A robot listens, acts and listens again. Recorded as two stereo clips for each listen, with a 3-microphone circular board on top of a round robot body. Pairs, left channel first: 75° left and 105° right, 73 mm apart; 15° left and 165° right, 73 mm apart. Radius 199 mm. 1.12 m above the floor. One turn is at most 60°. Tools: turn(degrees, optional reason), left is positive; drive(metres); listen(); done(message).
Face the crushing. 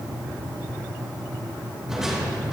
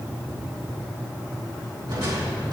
turn(degrees=60, reason="The crushing: 170° left.")
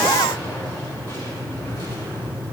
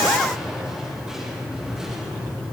turn(degrees=60, reason="Nothing new. It was at 110° left.")
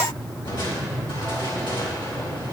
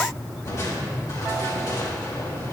turn(degrees=60, reason="The crushing is now 60° left.")
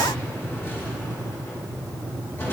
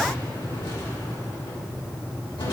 turn(degrees=20, reason="The crushing is now 20° left.")
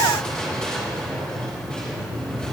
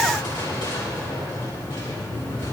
done("Facing the crushing, 2 to 4 m away.")